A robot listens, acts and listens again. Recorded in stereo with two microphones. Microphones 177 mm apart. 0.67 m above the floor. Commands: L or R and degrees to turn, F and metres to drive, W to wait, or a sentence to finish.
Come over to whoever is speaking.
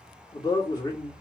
L25
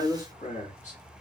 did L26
L125
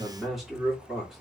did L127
F1.0
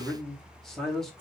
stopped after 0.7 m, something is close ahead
I am next to the man speaking.